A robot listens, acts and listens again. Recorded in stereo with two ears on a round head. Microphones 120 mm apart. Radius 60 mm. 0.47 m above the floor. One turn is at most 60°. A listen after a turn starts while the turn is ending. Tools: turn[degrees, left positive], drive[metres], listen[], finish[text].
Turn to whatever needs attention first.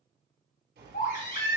Thought: The baby crying: about 70° left or 110° left.
Action: turn[60]
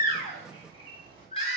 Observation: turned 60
Thought: So it is at 45° left.
Action: turn[45]
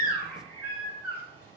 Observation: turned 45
Thought: The baby crying is now 15° right.
Action: turn[-15]
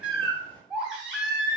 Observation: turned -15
Action: finish[Facing the baby crying, 2 to 4 m away.]